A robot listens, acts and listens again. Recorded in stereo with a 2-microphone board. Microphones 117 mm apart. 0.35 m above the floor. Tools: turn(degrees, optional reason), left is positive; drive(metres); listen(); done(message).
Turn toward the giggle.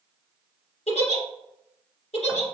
turn(degrees=90)
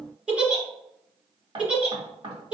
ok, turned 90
turn(degrees=-10, reason="So it is at 10° right.")
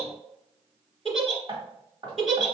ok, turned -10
done("Found it: a giggle, straight ahead.")